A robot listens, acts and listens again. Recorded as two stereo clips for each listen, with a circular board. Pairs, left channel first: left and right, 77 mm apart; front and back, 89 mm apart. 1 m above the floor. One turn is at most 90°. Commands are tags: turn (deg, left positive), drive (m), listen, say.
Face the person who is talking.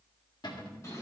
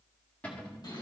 <listen/>
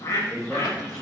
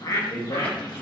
<say>Found it: a man speaking, straight ahead.</say>